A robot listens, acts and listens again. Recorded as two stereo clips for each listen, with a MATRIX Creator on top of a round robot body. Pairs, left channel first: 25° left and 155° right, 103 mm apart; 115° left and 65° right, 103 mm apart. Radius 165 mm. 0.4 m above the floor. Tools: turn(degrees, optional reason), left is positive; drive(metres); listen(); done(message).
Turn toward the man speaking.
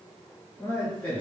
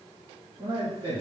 turn(degrees=-55, reason="The man speaking: 55° right.")
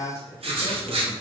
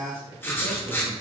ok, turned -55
turn(degrees=-20, reason="The man speaking is now 20° right.")
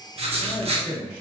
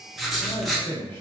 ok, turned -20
turn(degrees=-30, reason="The man speaking is now 30° right.")
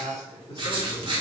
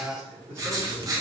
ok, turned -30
done("Found it: a man speaking, straight ahead.")